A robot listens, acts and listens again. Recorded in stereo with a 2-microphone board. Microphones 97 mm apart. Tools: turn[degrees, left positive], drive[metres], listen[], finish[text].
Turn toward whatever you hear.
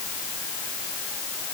Action: listen[]
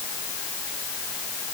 Action: listen[]
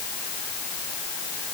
Action: finish[I can't make out anything to turn to.]